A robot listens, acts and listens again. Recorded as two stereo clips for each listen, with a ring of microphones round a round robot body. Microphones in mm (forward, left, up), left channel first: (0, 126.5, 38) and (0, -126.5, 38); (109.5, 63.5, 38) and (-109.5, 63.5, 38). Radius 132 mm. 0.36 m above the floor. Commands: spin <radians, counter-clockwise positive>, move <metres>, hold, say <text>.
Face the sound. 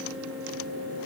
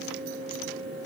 hold
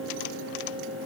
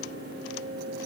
hold
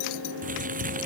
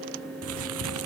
spin -2.62
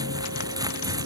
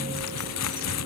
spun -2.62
spin -0.26
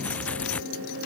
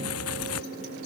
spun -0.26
say Found it: crumpling, straight ahead.